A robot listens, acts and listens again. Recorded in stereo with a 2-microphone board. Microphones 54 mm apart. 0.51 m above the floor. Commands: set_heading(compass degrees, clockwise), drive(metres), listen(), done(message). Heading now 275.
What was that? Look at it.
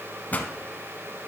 set_heading(245)
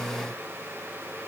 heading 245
listen()
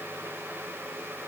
done("I heard a pop, but can't make it out now. It was about straight ahead or 120° left.")